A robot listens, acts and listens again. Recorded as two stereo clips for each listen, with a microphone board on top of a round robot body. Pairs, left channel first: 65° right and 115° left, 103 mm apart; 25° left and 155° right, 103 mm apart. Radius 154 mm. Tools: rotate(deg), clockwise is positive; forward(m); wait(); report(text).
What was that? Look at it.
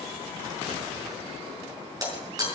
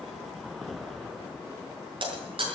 rotate(-165)
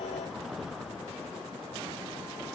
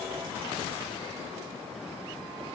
report("I heard breaking glass from this way, but can't make it out now.")